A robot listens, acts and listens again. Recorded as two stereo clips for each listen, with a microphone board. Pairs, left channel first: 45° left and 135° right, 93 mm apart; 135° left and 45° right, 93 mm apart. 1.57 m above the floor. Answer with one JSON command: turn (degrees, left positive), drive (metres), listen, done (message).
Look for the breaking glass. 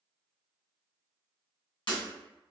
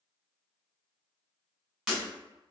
{"turn": 40}
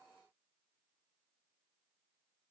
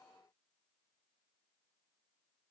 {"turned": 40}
{"done": "Facing where the breaking glass came from. I can't hear it now."}